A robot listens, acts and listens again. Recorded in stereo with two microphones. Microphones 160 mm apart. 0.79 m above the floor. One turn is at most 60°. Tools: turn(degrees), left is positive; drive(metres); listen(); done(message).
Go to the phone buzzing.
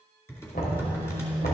turn(degrees=-30)
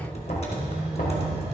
turn(degrees=-60)
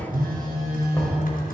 turn(degrees=-60)
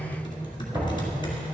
turn(degrees=-35)
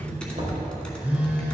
turn(degrees=-10)
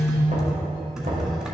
drive(metres=1.0)
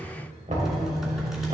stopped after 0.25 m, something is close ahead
done("Something is in my way. I am facing the phone buzzing but have not reached it.")